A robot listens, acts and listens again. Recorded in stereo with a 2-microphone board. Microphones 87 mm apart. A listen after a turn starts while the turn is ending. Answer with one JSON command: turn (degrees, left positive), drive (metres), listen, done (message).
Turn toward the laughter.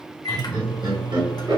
{"turn": -60}
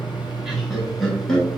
{"done": "Facing the laughter."}